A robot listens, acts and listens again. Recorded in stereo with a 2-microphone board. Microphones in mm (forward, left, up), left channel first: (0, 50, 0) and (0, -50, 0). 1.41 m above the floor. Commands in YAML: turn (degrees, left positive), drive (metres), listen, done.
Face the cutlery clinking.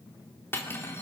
turn: 25
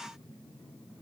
listen: true
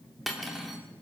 done: "Facing the cutlery clinking."